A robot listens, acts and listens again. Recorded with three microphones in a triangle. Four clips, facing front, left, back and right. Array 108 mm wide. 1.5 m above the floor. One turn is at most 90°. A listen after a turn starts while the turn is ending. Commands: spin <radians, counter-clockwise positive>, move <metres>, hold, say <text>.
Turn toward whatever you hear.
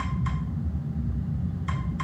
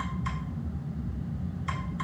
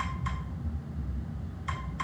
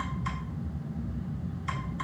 hold
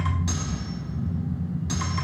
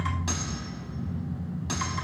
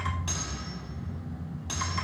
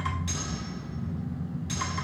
spin 1.57
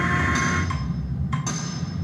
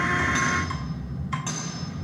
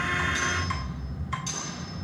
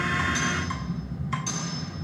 spin 0.61
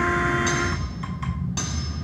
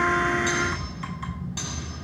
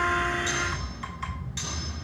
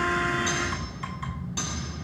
say Found it: cutlery clinking, straight ahead, over 4 m away.